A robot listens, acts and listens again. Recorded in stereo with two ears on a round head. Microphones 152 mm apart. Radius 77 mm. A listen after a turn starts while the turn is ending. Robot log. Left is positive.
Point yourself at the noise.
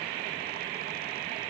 cmd idle
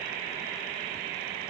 cmd idle
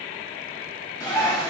note: The bird: about 20° left or 160° left.
cmd yaw +20
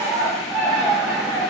end: Facing the bird.